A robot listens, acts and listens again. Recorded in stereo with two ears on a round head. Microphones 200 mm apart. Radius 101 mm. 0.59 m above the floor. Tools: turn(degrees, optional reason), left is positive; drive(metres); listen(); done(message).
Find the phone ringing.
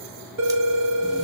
turn(degrees=-60, reason="The phone ringing: about 60° right or 120° right.")
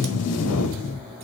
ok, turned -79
listen()
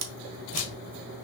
listen()
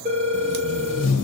turn(degrees=-30, reason="So it is at 30° right.")
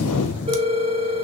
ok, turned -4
turn(degrees=-25, reason="The phone ringing is now 25° right.")
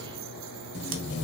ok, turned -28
listen()
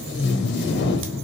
listen()
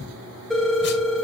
done("Found it: a phone ringing, straight ahead.")